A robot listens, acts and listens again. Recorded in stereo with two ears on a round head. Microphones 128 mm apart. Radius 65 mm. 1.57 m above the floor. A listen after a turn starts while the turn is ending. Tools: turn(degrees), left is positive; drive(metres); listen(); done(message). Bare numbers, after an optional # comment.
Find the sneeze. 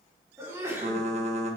# The sneeze: about 20° right or 160° right.
turn(-20)
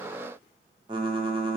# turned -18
listen()
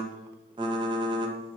done("I heard a sneeze, but can't make it out now. It was about straight ahead or 145° right.")